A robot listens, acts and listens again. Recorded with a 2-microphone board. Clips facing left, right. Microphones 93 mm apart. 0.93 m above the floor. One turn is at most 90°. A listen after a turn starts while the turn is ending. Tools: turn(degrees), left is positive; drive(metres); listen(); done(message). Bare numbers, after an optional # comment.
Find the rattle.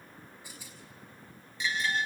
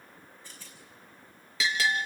turn(30)
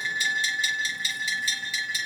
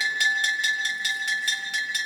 listen()
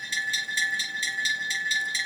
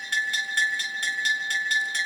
listen()
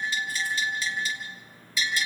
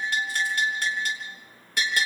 done("I heard a rattle, but can't make it out now. It was about 15° right or 135° left.")